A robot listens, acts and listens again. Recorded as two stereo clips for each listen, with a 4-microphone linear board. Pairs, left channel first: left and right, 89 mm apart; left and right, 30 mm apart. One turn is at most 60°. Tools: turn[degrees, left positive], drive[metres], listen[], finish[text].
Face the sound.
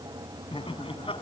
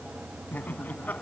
Action: turn[60]
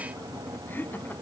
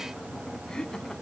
Thought: So it is at 20° left.
Action: turn[20]
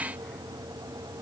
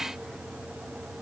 Action: listen[]
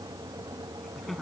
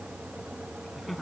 Action: finish[Found it: laughter, straight ahead.]